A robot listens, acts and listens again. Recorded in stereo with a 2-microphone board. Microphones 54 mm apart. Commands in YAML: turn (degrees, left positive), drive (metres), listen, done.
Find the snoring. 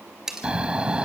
turn: -20
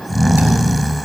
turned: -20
done: "Facing the snoring, 1 to 2 m away."